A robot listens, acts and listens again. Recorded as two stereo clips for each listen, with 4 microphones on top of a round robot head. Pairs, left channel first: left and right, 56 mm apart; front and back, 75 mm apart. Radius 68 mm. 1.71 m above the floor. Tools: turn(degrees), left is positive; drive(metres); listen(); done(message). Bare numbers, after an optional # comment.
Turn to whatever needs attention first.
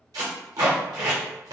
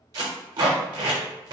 listen()
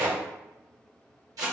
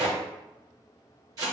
listen()
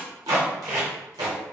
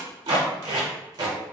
done("I can't make out anything urgent to turn to.")